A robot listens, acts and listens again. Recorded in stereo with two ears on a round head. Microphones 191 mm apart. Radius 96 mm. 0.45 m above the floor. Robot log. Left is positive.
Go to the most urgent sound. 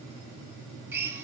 cmd idle
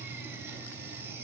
cmd idle
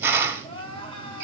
note: The crying: about 25° left or 155° left.
cmd yaw +25
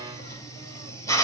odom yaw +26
cmd idle
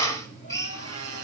cmd idle
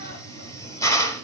end: I heard crying, but can't make it out now. It was about straight ahead or 130° left. I did not reach it.